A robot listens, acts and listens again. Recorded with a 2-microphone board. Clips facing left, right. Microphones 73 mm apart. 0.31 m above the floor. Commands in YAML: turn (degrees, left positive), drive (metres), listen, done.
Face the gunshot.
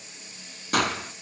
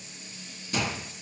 turn: 70
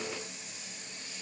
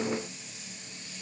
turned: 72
listen: true
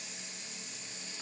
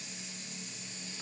done: "I heard a gunshot, but can't make it out now. It was about 5° right or 40° left."